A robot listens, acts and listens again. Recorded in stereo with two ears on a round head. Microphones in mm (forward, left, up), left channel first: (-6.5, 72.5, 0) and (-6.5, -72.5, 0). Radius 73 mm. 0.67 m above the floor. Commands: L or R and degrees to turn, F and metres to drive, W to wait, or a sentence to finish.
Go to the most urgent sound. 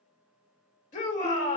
L45
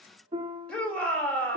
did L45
F1.0
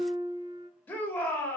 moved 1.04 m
L15
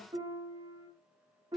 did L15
W
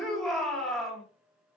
F1.0
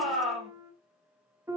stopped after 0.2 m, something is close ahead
I am next to the shout.